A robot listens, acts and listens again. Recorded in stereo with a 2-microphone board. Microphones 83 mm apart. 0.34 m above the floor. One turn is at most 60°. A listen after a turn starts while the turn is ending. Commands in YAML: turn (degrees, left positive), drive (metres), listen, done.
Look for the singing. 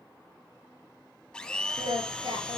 turn: -60
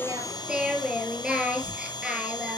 turn: -10
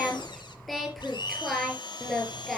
done: "Found it: singing, straight ahead."